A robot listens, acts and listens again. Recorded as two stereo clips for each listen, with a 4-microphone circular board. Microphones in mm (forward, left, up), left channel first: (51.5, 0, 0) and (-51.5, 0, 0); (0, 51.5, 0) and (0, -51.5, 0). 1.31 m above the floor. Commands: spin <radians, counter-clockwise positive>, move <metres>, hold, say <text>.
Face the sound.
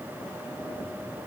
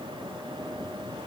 hold
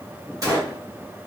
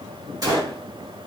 spin -2.36
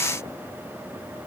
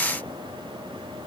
say I heard a gunshot from this way, but can't make it out now.